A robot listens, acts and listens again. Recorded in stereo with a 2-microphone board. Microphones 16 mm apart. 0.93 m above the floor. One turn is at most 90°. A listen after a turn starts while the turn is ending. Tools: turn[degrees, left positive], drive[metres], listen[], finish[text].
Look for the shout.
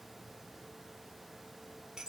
Action: listen[]
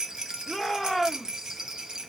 Action: turn[30]
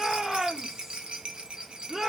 Thought: So it is at 25° right.
Action: turn[-25]
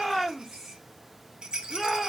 Action: finish[Facing the shout.]